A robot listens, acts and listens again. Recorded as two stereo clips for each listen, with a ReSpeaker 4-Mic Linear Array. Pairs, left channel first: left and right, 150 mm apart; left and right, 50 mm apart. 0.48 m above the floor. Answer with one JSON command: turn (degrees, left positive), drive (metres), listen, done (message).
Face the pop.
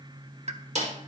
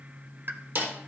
{"turn": -50}
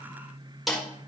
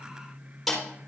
{"listen": true}
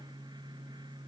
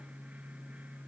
{"done": "I heard a pop, but can't make it out now. It was about straight ahead or 80° right."}